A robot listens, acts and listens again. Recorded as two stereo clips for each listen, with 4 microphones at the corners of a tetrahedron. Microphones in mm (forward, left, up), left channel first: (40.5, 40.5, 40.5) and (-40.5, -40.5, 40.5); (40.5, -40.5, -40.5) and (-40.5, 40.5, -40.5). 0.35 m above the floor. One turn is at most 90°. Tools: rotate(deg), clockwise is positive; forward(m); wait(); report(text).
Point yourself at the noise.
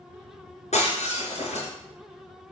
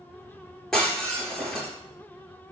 rotate(-40)
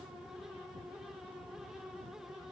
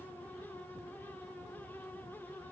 report("I heard breaking glass from this way, but can't make it out now.")